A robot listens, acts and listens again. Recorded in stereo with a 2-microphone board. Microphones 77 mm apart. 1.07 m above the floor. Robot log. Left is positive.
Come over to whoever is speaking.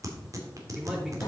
cmd yaw +30
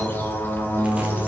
cmd idle
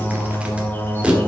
cmd idle
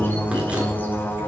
end: I heard a man speaking, but can't make it out now. It was about 30° right or 150° left. I did not reach it.